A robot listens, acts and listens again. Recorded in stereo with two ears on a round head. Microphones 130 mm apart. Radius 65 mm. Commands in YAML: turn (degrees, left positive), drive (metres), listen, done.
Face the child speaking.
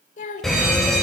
turn: 55
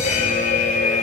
listen: true
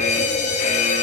listen: true
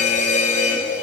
done: "I heard a child speaking, but can't make it out now. It was about straight ahead or 70° left."